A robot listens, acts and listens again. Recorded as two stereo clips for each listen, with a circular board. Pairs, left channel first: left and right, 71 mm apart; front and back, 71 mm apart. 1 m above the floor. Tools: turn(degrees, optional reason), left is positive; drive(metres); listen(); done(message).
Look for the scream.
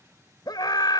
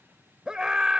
turn(degrees=100, reason="The scream: 100° left.")
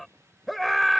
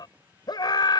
done("Found it: a scream, straight ahead.")